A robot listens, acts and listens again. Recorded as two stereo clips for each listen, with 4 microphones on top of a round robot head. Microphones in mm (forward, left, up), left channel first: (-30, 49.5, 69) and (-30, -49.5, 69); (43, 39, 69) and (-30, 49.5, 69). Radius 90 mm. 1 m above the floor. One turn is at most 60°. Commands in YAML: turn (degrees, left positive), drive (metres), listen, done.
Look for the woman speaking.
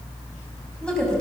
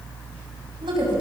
turn: 60
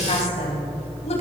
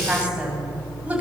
turn: 60
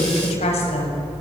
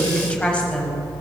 turn: 60
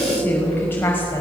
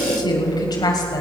turn: 20
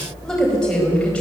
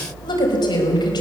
turn: 10
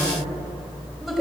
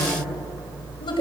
done: "Facing the woman speaking."